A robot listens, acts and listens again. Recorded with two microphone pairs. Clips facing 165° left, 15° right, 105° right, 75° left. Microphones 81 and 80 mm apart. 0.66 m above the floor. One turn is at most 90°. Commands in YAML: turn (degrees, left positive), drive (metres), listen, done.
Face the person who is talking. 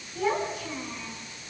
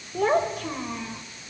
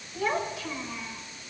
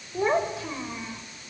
turn: 10
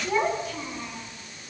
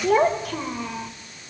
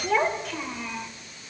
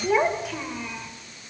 turn: -15
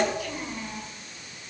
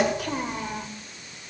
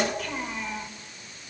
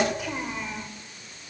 turn: -10
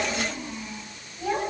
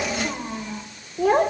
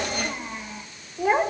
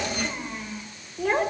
turn: -25
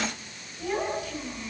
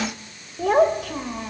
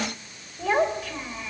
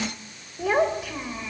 done: "Facing the child speaking."